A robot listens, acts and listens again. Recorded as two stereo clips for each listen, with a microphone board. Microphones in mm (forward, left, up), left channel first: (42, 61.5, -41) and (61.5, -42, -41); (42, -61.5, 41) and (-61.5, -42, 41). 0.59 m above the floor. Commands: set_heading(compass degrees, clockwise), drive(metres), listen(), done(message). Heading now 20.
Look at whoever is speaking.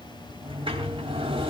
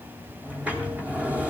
listen()
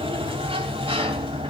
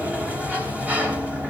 listen()
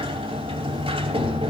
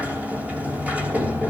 done("I can't make out anyone speaking to turn to.")